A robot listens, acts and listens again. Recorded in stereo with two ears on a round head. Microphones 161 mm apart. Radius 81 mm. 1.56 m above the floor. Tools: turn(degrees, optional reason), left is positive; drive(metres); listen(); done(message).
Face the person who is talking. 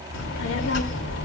turn(degrees=90)
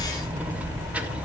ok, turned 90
turn(degrees=-10, reason="So it is at 10° right.")
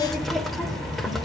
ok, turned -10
done("Found it: a child speaking, straight ahead.")